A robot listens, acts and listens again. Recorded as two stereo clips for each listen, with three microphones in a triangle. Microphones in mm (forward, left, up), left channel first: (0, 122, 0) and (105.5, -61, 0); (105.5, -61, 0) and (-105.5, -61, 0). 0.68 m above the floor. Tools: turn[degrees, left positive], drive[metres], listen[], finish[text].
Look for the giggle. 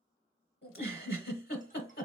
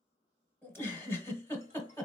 Thought: The giggle: 80° left.
Action: turn[80]
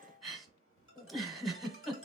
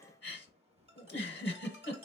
Thought: The giggle is now 30° left.
Action: turn[30]
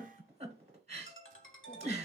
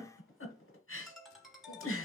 Action: finish[Facing the giggle.]